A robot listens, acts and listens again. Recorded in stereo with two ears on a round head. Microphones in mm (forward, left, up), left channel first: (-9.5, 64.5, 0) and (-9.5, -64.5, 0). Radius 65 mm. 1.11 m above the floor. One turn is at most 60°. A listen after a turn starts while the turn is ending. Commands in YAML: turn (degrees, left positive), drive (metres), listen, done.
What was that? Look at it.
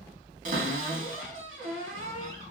turn: -60
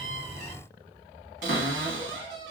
turn: -55
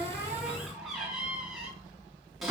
done: "Facing the cupboard door."